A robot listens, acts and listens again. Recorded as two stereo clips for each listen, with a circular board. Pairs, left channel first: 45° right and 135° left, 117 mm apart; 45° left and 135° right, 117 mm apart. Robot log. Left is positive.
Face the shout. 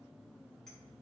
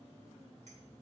cmd idle
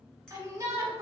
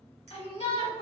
note: The shout: 70° left.
cmd yaw +70
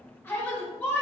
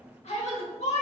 note: The shout is now 25° left.
cmd yaw +25
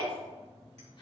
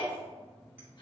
end: Found it: a shout, straight ahead.